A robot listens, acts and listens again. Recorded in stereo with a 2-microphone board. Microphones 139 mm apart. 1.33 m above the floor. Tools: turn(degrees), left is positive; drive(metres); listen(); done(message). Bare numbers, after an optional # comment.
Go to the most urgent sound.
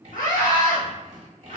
turn(90)
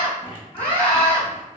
# So it is at 10° left.
turn(10)
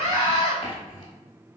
drive(1.0)
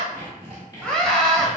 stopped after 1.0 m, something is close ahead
done("Arrived at the scream, straight ahead.")